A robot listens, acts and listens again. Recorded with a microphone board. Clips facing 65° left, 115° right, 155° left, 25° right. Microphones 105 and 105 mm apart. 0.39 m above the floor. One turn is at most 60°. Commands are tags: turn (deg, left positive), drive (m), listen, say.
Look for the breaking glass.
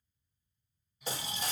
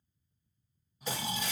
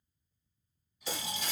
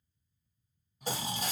<turn deg="15"/>
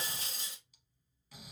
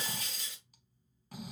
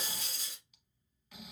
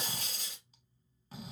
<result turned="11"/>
<say>Facing the breaking glass.</say>